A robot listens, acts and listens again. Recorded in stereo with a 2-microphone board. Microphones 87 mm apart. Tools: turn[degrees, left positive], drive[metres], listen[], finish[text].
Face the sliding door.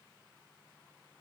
Action: listen[]
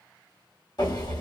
Thought: The sliding door: about 50° left or 130° left.
Action: turn[50]
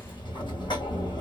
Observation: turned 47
Thought: So it is at 80° left.
Action: turn[80]
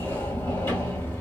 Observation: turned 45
Thought: The sliding door is now 35° left.
Action: turn[35]
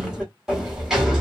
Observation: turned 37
Action: finish[Facing the sliding door, 1 to 2 m away.]